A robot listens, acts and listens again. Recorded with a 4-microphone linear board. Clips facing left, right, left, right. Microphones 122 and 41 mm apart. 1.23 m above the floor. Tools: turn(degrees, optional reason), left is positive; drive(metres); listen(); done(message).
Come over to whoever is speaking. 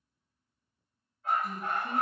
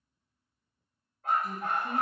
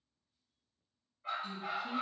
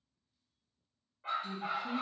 turn(degrees=30)
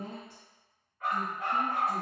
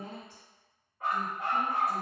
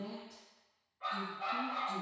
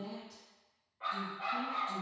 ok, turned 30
turn(degrees=145, reason="So it is at 145° left.")
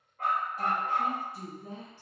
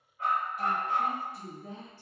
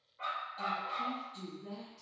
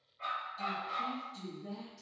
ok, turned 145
turn(degrees=35, reason="The woman speaking is now 35° left.")
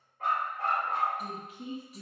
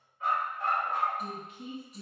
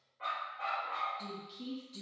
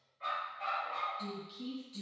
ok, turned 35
drive(metres=1.0)
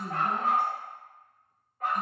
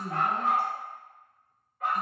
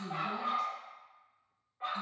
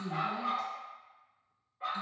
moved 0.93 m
turn(degrees=20, reason="The woman speaking is now 20° left.")
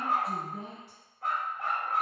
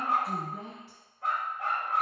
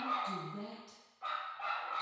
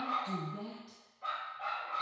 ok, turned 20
drive(metres=1.0)
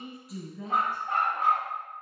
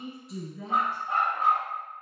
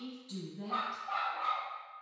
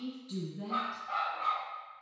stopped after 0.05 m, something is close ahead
done("I am next to the woman speaking.")